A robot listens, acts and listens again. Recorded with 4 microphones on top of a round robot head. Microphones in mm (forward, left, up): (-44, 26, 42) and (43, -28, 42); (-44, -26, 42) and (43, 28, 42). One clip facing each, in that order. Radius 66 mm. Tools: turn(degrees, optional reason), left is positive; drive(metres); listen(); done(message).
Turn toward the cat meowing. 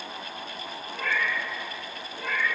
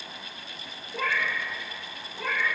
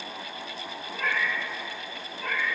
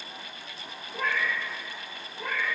turn(degrees=-45, reason="The cat meowing: 45° right.")
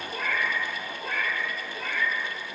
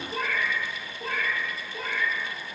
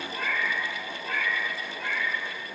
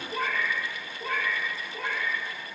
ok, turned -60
turn(degrees=20, reason="The cat meowing is now 20° left.")
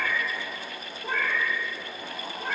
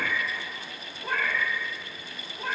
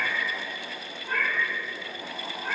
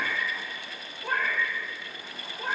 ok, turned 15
done("Found it: a cat meowing, straight ahead.")